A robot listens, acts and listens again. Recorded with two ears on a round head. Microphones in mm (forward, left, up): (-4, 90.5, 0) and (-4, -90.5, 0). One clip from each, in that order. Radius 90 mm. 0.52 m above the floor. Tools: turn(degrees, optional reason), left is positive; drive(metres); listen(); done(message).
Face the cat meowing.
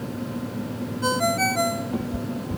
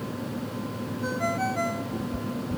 turn(degrees=45, reason="The cat meowing: about 45° left or 135° left.")
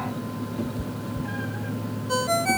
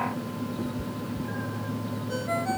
turn(degrees=90, reason="So it is at 90° left.")
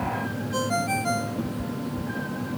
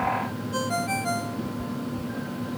turn(degrees=35, reason="The cat meowing is now 35° left.")
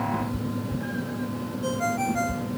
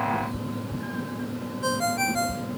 done("Facing the cat meowing.")